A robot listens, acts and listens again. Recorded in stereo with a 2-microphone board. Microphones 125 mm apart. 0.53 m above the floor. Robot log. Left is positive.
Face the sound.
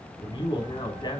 note: The man speaking: about 35° left or 145° left.
cmd yaw +35
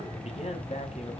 note: So it is at 120° left.
cmd yaw +120
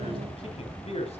note: The man speaking is now 55° left.
cmd yaw +55
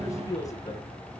note: The man speaking is now 30° left.
cmd yaw +30
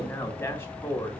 note: The man speaking is now 25° left.
cmd yaw +25
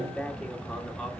end: Facing the man speaking.